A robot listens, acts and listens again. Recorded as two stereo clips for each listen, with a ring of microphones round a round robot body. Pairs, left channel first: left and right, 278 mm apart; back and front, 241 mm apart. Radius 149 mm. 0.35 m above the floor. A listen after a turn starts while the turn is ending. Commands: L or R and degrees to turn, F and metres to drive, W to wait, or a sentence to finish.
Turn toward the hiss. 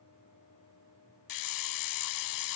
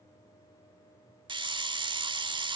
L70
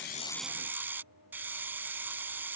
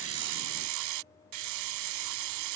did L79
Facing the hiss.